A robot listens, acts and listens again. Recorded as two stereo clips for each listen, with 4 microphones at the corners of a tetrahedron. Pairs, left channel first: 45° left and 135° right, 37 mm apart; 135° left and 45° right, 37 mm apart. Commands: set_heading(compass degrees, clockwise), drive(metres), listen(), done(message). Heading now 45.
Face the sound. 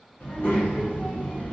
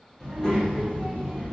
set_heading(320)
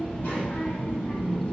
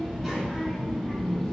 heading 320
set_heading(260)
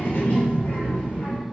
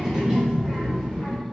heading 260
set_heading(210)
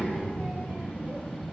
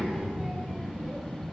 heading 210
set_heading(175)
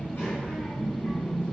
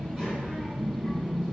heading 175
done("Facing the child speaking, 1 to 2 m away.")